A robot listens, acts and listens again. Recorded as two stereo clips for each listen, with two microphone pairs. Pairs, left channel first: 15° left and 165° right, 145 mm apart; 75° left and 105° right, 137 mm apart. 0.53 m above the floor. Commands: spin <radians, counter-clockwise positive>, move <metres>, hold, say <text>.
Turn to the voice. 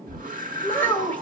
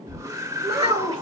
spin -1.05
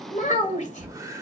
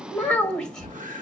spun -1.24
say Found it: a child speaking, straight ahead.